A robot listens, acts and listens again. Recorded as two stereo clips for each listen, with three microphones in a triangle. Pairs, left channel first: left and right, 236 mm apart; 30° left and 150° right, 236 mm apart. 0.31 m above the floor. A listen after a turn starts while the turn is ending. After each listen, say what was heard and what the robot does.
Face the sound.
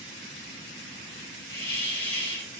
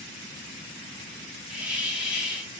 The hiss: 125° left. Turn 125° left.
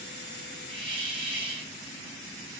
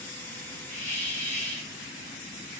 The hiss is now 25° right. Turn 25° right.
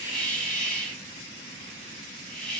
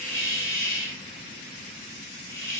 Found it: a hiss, straight ahead, 1 to 2 m away.